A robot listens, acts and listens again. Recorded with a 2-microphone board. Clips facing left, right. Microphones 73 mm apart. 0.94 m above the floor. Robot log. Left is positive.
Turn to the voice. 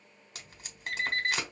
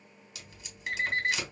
cmd idle
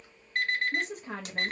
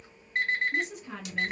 note: The woman speaking: about 45° left or 135° left.
cmd yaw +45
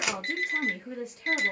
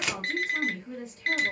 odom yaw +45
note: So it is at 85° left.
cmd yaw +85
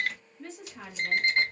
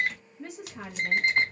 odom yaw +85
note: The woman speaking is now 10° right.
cmd yaw -10
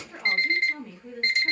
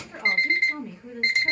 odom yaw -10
end: Facing the woman speaking, under 1 m away.